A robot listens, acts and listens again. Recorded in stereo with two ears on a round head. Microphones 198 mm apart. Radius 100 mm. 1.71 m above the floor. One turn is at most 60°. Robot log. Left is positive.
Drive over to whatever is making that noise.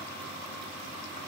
cmd idle
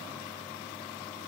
cmd idle
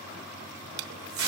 note: The tape being pulled: about 65° right or 115° right.
cmd yaw -60
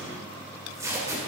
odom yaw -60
note: So it is at 15° right.
cmd yaw -15
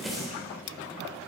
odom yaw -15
cmd fwd 1.0
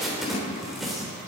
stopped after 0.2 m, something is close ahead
end: Blocked. The tape being pulled is further on, straight ahead.